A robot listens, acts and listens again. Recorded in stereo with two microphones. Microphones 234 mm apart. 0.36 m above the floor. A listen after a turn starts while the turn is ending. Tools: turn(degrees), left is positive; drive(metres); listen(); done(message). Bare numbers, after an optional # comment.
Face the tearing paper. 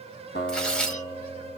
turn(30)
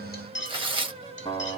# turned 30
# So it is at 25° right.
turn(-25)
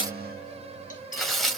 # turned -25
done("Facing the tearing paper, 1 to 2 m away.")